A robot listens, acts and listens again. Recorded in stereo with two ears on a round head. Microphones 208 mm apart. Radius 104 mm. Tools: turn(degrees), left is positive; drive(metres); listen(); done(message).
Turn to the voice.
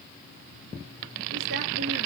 listen()
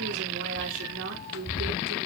turn(degrees=-55)
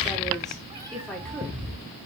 done("Facing the woman speaking, over 4 m away.")